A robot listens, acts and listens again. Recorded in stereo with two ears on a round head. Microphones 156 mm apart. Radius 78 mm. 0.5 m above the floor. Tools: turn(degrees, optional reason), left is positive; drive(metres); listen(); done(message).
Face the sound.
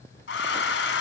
turn(degrees=70, reason="The hair dryer: about 70° left or 110° left.")
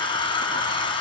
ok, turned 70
turn(degrees=30, reason="So it is at 30° left.")
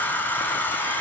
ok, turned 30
turn(degrees=10, reason="The hair dryer is now 10° left.")
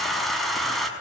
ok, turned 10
done("Found it: a hair dryer, straight ahead.")